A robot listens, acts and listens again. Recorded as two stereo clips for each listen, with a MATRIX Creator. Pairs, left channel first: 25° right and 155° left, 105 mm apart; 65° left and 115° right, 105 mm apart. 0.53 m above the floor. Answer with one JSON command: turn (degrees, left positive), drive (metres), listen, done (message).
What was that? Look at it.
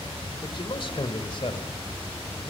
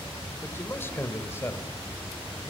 {"done": "Facing the man speaking, 2 to 4 m away."}